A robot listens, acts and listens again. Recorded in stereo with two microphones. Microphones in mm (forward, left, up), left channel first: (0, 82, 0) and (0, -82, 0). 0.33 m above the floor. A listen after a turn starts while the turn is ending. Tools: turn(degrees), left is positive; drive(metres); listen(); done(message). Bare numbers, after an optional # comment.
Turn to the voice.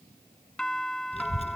# The child speaking: about 40° left or 140° left.
turn(40)
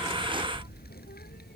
# So it is at 100° left.
turn(100)
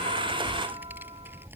# The child speaking is now 15° right.
turn(-15)
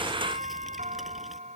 listen()
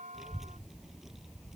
done("Facing the child speaking.")